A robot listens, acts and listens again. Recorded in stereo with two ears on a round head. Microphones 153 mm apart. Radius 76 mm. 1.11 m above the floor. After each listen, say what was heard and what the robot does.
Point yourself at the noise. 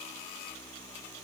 Keep listening.
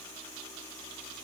Keep listening.
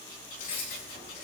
The keys jangling: about 40° left or 140° left. Turn 40° left.
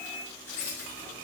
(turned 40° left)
So it is at 105° left. Turn 105° left.
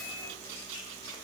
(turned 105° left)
Keep listening.
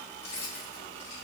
The keys jangling is now 35° left. Turn 35° left.
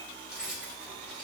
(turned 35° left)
Facing the keys jangling.